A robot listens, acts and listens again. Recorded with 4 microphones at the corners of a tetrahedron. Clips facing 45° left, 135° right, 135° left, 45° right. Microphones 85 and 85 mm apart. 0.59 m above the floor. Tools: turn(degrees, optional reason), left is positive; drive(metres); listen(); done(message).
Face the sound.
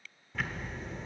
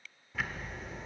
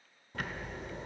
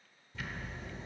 turn(degrees=140, reason="The ticking: 140° left.")
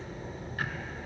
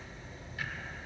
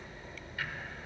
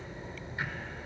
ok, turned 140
turn(degrees=15, reason="The ticking is now 15° left.")
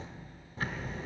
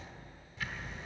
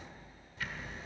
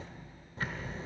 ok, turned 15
done("Found it: ticking, straight ahead.")